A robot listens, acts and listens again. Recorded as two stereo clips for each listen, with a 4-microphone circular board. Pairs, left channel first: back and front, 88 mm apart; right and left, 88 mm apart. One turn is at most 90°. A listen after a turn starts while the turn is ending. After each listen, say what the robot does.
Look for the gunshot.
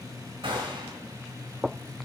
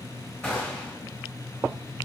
Turn 15° right.
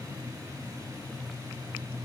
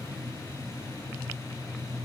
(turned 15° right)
I heard a gunshot from this way, but can't make it out now.